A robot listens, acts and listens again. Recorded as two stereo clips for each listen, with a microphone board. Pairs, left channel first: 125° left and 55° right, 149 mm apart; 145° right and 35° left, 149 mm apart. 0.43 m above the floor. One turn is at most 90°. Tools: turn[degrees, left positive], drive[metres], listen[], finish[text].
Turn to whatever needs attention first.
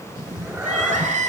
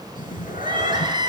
Thought: The crying: 25° right.
Action: turn[-25]
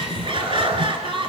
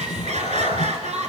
Action: finish[Found it: crying, straight ahead.]